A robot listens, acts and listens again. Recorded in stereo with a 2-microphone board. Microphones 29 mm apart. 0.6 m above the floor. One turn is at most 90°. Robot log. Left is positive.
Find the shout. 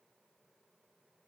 cmd idle
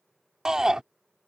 note: The shout: about 25° right or 155° right.
cmd yaw -25
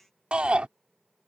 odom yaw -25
note: So it is at 125° right.
cmd yaw -90
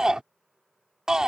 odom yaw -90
note: The shout is now 25° right.
cmd yaw -25
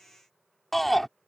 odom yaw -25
note: The shout is now 10° left.
cmd yaw +10
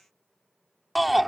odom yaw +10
end: Facing the shout.